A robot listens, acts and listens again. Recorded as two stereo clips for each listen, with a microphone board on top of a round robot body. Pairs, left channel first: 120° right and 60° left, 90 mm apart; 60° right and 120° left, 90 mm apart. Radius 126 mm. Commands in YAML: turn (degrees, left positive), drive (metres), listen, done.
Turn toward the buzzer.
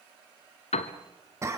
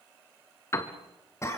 listen: true
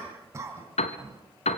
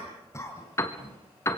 listen: true
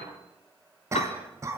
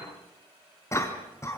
done: "I can't make out a buzzer, only a piano and a cough."